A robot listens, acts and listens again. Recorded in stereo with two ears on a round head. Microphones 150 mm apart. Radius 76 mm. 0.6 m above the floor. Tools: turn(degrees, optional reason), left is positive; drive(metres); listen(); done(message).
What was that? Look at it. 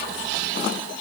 listen()
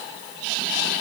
listen()
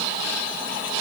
done("I can't make out anything.")